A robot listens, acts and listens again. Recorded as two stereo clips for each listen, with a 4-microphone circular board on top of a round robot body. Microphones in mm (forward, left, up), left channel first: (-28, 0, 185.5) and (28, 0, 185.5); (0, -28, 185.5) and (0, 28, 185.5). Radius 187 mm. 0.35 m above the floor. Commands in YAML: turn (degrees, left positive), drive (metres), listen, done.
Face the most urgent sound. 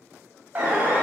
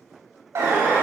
turn: 65
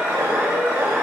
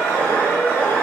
turn: -25
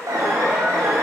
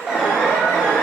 turn: 15
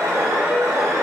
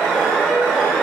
done: "Facing the alarm, over 4 m away."